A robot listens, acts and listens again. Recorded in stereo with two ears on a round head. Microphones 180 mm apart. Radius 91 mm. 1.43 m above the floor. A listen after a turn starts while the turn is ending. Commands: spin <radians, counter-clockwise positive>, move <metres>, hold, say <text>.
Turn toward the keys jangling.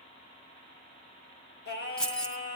spin 0.52
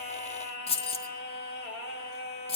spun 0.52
spin 2.53
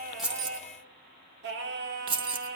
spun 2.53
spin -0.52
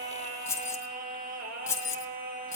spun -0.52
spin 0.26
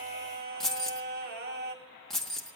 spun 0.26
say Found it: keys jangling, straight ahead.